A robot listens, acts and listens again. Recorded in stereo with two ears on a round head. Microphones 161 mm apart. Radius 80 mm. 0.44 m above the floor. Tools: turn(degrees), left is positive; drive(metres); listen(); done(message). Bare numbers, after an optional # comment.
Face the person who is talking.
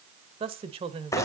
# The woman speaking: about 30° right or 150° right.
turn(-30)
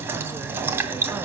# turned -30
listen()
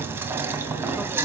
listen()
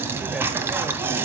done("I heard a woman speaking, but can't make it out now. It was about straight ahead or 120° right.")